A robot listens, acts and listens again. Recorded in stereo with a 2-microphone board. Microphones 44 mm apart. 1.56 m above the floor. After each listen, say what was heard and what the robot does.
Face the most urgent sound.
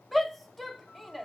Turn 30° left.
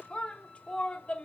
So it is at 150° left. Turn 150° left.
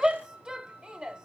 The shout is now 20° right. Turn 20° right.
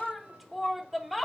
Facing the shout.